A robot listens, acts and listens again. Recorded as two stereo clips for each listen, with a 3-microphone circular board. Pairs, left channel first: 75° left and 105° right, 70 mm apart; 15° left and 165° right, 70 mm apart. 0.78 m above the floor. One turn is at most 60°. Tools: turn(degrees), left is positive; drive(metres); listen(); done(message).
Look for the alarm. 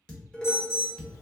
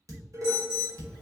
turn(degrees=60)
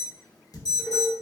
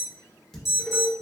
turn(degrees=60)
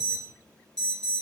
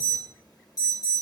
done("Facing the alarm, under 1 m away.")